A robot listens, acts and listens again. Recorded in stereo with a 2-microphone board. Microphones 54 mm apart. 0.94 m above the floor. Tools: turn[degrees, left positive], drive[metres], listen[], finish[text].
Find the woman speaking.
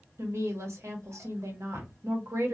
Thought: The woman speaking: about 65° right or 115° right.
Action: turn[-65]
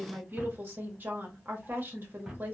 Thought: So it is at 45° right.
Action: turn[-45]
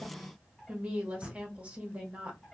Thought: The woman speaking is now 30° right.
Action: turn[-30]
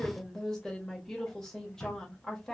Action: finish[Found it: a woman speaking, straight ahead, under 1 m away.]